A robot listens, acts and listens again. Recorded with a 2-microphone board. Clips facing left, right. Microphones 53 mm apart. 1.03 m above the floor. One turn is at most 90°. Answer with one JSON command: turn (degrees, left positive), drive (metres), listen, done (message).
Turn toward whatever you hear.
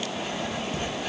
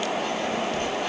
{"turn": 30}
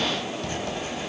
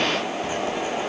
{"turn": -15}
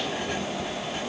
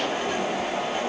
{"listen": true}
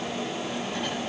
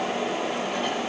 {"listen": true}
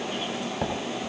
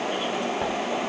{"done": "Facing the writing."}